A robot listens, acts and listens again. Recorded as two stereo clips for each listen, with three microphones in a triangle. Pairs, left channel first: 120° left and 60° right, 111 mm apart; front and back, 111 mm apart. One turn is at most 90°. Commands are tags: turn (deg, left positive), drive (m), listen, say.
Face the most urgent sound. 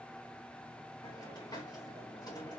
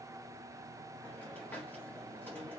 <listen/>
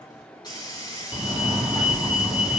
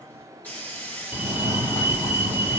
<turn deg="40"/>
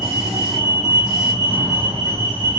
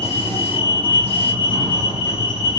<turn deg="-10"/>
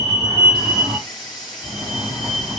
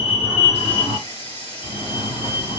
<say>Facing the fire alarm.</say>